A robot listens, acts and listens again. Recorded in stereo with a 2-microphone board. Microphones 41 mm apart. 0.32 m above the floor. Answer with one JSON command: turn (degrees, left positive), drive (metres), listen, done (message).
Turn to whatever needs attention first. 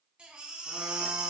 {"turn": -25}
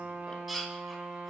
{"done": "Facing the baby crying."}